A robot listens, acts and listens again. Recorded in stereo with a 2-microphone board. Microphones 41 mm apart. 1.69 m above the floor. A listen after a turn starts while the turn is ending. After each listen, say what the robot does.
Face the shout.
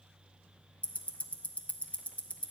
Keep listening.
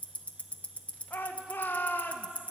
Turn 50° left.
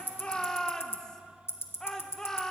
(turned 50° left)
Turn 15° left.
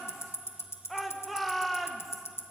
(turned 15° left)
Found it: a shout, straight ahead.